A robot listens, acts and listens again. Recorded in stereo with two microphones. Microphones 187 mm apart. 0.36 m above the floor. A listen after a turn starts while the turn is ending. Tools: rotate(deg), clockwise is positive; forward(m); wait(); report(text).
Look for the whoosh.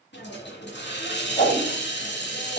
rotate(-50)
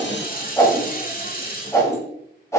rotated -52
rotate(-20)
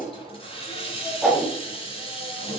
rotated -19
report("Facing the whoosh, 1 to 2 m away.")